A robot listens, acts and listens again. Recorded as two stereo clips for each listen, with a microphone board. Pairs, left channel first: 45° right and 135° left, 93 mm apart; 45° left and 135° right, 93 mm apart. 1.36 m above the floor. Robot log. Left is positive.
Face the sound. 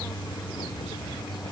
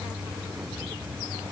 cmd idle
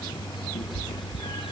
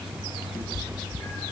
note: The cat meowing: 20° right.
cmd yaw -20
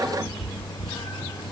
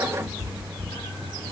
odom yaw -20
end: Found it: a cat meowing, straight ahead.